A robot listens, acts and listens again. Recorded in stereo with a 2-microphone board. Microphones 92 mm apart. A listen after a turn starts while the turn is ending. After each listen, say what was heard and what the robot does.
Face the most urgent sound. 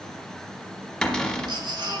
The baby crying: about 55° right or 125° right. Turn 55° right.
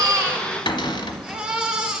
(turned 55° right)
So it is at 10° right. Turn 10° right.
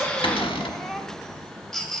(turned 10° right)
Facing the baby crying, 1 to 2 m away.